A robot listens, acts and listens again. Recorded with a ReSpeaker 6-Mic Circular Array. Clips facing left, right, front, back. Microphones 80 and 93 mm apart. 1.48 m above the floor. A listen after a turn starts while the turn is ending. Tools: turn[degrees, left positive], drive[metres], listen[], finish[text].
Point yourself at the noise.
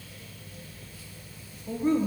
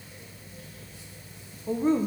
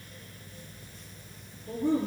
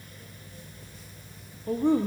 Thought: The woman speaking: 155° right.
Action: turn[-155]
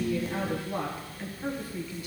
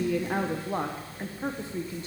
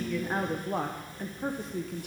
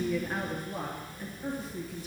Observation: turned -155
Thought: The woman speaking is now 30° right.
Action: turn[-30]
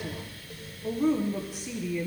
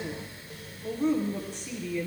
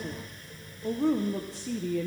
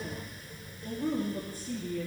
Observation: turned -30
Action: finish[Found it: a woman speaking, straight ahead, 1 to 2 m away.]